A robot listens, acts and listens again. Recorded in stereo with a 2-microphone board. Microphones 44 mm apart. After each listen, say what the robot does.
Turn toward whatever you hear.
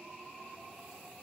Keep listening.
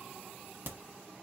Turn 50° right.
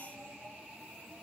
Keep listening.
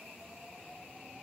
I heard a crack, but can't make it out now. It was about straight ahead or 80° right.